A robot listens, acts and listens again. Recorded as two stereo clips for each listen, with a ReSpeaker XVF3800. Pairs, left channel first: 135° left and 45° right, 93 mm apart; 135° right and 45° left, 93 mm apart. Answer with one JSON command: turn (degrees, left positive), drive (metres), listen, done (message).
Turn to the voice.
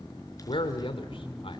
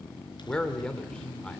{"turn": 145}
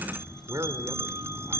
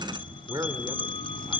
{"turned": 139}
{"done": "Found it: a man speaking, straight ahead."}